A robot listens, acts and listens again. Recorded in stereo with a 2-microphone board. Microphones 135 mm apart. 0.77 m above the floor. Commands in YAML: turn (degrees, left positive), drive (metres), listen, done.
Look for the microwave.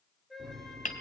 turn: -30
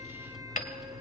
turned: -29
done: "Found it: a microwave, straight ahead."